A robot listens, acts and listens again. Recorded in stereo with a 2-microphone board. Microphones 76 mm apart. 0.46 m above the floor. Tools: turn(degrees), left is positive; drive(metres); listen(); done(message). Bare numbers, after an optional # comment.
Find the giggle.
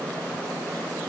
listen()
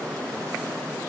listen()
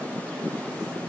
done("I can't make out a giggle to turn to.")